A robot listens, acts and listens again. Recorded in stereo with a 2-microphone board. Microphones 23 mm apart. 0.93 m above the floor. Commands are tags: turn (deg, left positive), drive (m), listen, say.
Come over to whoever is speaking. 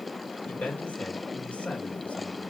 <turn deg="70"/>
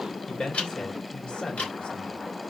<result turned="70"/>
<turn deg="40"/>
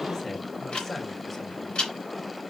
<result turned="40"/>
<turn deg="20"/>
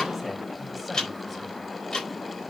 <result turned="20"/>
<listen/>
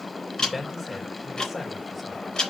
<drive m="1.0"/>
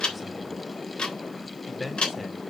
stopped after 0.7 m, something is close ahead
<say>Blocked. The man speaking is further on, straight ahead.</say>